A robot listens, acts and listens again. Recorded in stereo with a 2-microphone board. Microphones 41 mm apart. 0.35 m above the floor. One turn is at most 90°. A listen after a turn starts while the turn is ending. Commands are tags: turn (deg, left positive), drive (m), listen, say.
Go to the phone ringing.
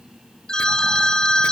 <turn deg="15"/>
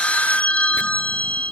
<turn deg="90"/>
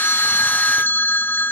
<turn deg="55"/>
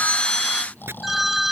<drive m="1.0"/>
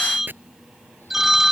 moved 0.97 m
<turn deg="-10"/>
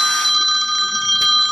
<drive m="1.0"/>
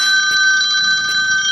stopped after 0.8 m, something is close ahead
<say>Arrived at the phone ringing, straight ahead.</say>